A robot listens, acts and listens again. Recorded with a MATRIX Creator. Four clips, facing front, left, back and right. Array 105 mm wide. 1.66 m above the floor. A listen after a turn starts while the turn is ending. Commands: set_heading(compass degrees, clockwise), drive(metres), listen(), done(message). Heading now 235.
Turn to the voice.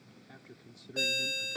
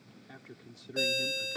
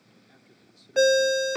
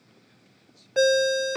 set_heading(165)
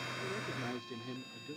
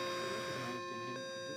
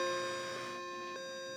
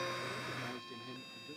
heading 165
listen()
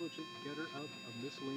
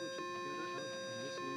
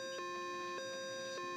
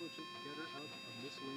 listen()
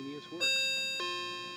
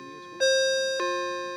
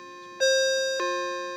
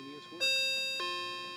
done("I heard a man speaking from this way, but can't make it out now.")